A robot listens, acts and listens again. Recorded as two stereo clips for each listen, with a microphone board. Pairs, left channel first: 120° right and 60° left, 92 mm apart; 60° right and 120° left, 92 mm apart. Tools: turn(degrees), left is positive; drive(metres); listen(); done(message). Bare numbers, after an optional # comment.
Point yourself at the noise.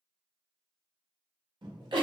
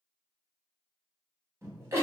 # The giggle: 65° left.
turn(65)
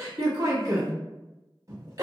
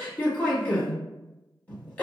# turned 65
# The giggle is now 10° left.
turn(10)
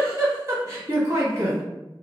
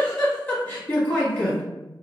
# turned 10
done("Facing the giggle.")